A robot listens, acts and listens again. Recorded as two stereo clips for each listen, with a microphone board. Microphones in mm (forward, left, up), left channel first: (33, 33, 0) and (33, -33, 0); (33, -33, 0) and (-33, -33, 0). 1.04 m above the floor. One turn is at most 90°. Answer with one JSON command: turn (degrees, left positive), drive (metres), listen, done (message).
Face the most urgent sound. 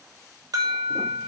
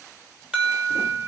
{"turn": -90}
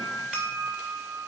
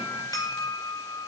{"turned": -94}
{"turn": -10}
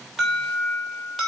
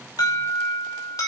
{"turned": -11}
{"done": "Found it: an alarm, straight ahead."}